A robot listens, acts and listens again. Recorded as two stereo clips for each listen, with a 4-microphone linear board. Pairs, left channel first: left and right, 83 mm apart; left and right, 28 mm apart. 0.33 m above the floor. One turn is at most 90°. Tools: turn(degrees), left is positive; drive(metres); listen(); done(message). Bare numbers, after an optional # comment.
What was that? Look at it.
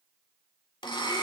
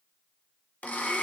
# The blender: about 70° left or 110° left.
turn(70)
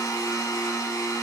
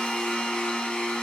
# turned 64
# So it is at 45° left.
turn(45)
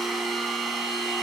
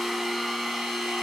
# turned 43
done("Facing the blender.")